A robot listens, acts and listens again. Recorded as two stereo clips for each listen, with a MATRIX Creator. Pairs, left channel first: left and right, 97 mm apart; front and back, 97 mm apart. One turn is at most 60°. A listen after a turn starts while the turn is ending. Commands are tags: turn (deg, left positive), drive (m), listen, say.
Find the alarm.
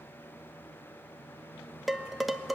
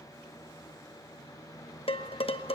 <listen/>
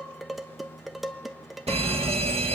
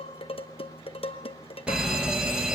<turn deg="-60"/>
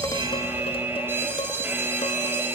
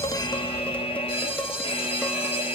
<turn deg="-25"/>
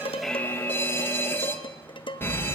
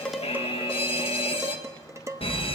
<turn deg="20"/>
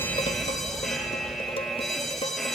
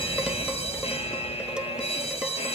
<say>Found it: an alarm, straight ahead, 1 to 2 m away.</say>